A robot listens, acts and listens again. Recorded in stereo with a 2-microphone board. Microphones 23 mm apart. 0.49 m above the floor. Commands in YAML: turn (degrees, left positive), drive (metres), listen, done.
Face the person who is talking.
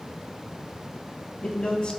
turn: 55
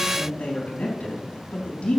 turn: 70
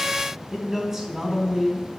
turn: -25
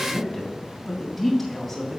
done: "Facing the man speaking."